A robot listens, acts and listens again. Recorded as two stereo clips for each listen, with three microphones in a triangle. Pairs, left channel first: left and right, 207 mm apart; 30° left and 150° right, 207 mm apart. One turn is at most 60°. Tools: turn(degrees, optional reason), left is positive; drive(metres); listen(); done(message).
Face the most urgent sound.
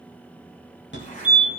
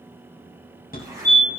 turn(degrees=60, reason="The fire alarm: 70° left.")
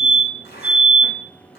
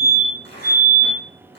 turn(degrees=-10, reason="The fire alarm is now 10° right.")
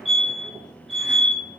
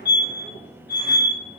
done("Facing the fire alarm.")